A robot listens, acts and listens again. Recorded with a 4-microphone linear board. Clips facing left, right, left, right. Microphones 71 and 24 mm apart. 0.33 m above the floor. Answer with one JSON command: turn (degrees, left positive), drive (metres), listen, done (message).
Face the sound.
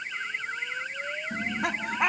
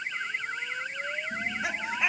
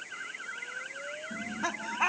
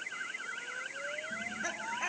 {"turn": 60}
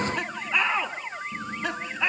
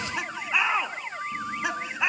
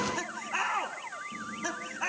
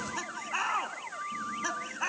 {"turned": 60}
{"turn": -15}
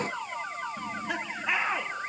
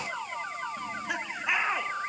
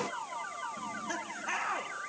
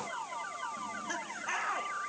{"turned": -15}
{"done": "Facing the laughter, 2 to 4 m away."}